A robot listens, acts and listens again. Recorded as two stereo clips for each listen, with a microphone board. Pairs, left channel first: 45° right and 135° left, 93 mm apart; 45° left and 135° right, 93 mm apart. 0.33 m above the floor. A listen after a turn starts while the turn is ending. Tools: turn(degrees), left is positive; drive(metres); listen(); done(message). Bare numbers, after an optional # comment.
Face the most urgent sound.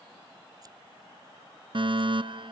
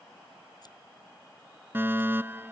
# The fire alarm: 160° left.
turn(160)
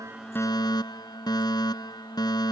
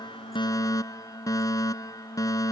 done("Found it: a fire alarm, straight ahead.")